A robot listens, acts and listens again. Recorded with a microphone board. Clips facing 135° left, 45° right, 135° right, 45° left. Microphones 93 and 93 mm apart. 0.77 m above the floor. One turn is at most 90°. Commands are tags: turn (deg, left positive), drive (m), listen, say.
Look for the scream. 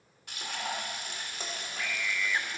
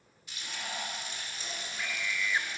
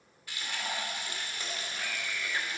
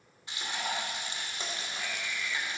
<turn deg="-90"/>
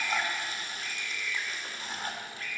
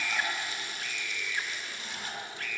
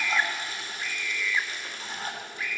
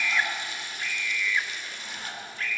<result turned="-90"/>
<turn deg="-55"/>
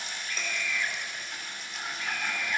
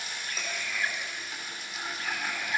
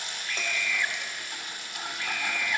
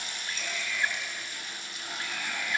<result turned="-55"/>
<say>Facing the scream.</say>